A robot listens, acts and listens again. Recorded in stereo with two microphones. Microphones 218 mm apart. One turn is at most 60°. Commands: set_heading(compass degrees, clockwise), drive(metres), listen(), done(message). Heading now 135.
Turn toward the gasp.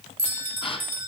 set_heading(110)
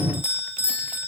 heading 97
listen()
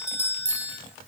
done("I heard a gasp, but can't make it out now. It was about 15° right or 120° left.")